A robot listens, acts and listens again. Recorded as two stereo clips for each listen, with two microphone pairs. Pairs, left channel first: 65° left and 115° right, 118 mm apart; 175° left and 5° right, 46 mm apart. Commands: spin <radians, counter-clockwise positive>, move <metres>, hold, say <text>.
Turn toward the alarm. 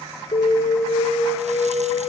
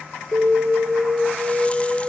spin 0.52
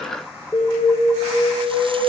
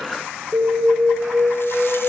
say Found it: an alarm, straight ahead, over 4 m away.